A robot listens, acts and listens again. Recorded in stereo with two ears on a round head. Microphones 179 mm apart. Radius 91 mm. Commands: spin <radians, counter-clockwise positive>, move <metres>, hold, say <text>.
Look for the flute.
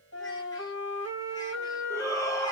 spin 1.13
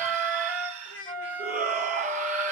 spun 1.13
spin 0.17
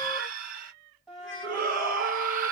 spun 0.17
say Facing the flute, 1 to 2 m away.